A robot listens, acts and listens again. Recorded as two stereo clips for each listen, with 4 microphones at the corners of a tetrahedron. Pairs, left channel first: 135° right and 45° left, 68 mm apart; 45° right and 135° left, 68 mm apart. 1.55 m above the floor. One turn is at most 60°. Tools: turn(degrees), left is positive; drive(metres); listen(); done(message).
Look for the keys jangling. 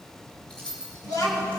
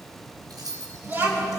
turn(degrees=60)
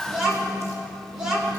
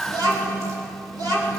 turn(degrees=60)
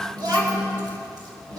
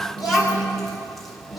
turn(degrees=30)
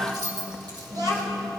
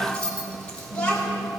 turn(degrees=30)
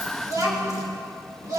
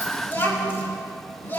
listen()
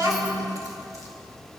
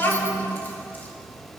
listen()
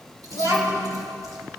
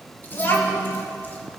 done("Facing where the keys jangling came from. I can't hear it now.")